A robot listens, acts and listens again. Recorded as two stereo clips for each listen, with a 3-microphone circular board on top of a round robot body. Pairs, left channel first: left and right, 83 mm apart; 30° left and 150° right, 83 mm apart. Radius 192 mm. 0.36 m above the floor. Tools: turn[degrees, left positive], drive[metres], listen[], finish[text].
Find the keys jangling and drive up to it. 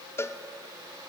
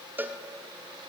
Action: listen[]
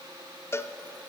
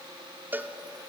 Action: listen[]
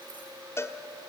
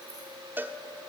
Action: finish[I can't make out keys jangling, only a cowbell.]